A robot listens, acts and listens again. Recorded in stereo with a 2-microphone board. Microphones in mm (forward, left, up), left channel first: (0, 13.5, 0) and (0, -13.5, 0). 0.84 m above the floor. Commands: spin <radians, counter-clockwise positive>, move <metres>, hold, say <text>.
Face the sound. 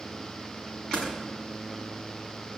spin 0.70
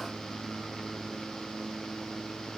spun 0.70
hold
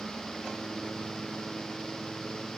say I heard a door slam, but can't make it out now. It was about straight ahead or 100° left.